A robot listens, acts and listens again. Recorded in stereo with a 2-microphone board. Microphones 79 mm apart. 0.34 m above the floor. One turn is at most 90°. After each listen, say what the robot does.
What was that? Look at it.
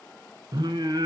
Turn 65° right.
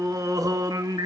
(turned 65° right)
Turn 50° right.
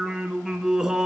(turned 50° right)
Turn 10° right.
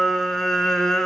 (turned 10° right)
Found it: singing, straight ahead.